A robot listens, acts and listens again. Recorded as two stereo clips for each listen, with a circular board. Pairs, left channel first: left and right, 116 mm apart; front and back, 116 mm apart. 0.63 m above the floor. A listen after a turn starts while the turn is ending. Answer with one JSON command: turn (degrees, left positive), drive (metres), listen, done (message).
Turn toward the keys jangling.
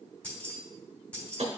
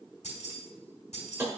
{"turn": 10}
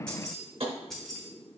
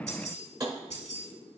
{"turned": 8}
{"done": "Found it: keys jangling, straight ahead, 1 to 2 m away."}